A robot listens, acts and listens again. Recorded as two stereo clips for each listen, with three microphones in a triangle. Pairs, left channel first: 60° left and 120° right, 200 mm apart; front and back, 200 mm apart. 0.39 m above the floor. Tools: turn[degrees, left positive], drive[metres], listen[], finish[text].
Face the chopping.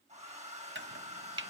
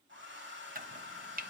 Thought: The chopping: 140° right.
Action: turn[-140]
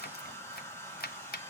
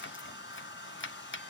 Thought: The chopping is now 20° left.
Action: turn[20]
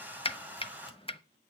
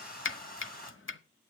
Action: finish[Facing the chopping, under 1 m away.]